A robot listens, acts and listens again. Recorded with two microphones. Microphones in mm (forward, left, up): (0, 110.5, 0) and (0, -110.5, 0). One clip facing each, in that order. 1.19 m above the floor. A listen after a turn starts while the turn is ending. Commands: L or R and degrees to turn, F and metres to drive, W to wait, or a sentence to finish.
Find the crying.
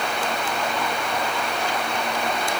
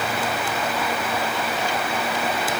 W
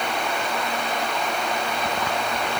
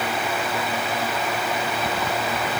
W
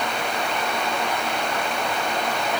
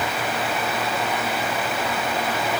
I can't make out crying to turn to.